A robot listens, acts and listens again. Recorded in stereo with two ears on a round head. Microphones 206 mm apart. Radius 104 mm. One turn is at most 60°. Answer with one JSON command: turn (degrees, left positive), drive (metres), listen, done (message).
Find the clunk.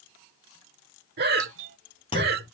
{"turn": 25}
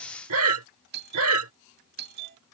{"listen": true}
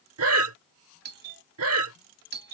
{"done": "I heard a clunk, but can't make it out now. It was about straight ahead or 130° left."}